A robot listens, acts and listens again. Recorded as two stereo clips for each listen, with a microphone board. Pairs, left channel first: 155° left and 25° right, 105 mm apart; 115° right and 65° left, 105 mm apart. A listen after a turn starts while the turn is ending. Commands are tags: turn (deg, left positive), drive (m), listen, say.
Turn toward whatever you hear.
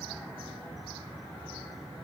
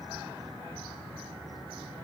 <listen/>
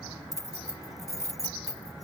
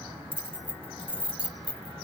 <turn deg="-145"/>
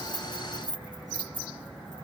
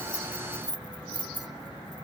<turn deg="20"/>
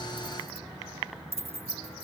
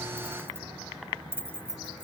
<say>Found it: keys jangling, straight ahead.</say>